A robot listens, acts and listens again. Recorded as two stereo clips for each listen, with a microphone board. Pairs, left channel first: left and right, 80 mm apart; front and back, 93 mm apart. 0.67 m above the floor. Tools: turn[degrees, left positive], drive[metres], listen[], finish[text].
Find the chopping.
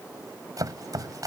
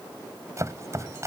Thought: The chopping: 125° right.
Action: turn[-125]
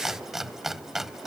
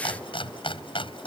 Action: finish[Found it: chopping, straight ahead.]